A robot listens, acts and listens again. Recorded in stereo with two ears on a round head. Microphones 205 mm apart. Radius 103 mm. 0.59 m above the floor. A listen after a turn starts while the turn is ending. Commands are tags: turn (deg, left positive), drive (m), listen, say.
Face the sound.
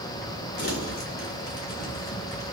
<turn deg="45"/>
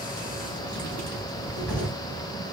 <say>Facing the crumpling.</say>